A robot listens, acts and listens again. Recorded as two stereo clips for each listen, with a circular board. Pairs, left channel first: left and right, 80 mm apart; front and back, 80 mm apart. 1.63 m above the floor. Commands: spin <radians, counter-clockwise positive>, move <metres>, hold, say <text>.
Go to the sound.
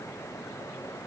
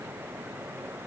hold
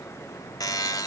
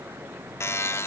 spin 0.96
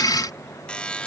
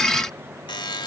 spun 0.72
spin 0.26
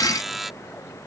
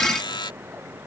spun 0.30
move 1.0
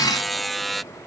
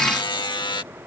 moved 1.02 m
move 1.0
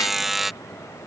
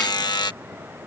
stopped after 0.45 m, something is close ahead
say I am next to the buzzer.